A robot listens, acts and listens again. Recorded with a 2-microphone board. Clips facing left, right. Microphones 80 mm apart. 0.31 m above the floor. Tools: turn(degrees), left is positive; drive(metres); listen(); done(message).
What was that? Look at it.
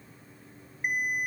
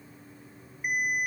turn(degrees=40)
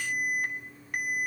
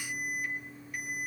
turn(degrees=90)
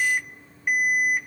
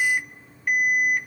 done("Found it: an alarm, straight ahead, 2 to 4 m away.")